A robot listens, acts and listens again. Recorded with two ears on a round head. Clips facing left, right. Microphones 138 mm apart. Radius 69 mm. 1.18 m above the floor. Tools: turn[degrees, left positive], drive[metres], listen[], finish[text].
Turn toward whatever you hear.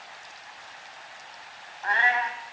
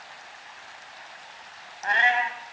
Thought: The cat meowing: about 25° right or 155° right.
Action: turn[-25]
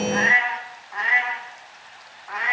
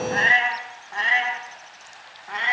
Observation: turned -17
Thought: The cat meowing: about 35° right or 145° right.
Action: turn[-35]
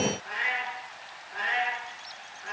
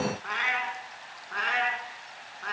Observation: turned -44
Thought: So it is at 105° right.
Action: turn[-105]
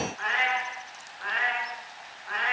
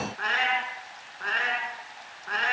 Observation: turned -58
Thought: The cat meowing is now 45° right.
Action: turn[-45]
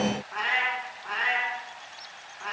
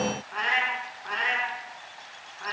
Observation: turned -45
Action: finish[Found it: a cat meowing, straight ahead, over 4 m away.]